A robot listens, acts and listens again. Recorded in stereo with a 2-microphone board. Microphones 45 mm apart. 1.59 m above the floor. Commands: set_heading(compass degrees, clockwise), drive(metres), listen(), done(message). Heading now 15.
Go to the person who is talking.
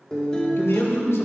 set_heading(305)
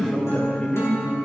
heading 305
listen()
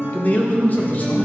set_heading(265)
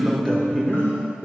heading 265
listen()
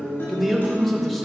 drive(1.0)
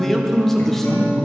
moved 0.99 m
drive(1.0)
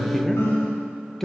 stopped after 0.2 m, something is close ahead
set_heading(255)
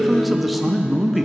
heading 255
done("I am next to the man speaking.")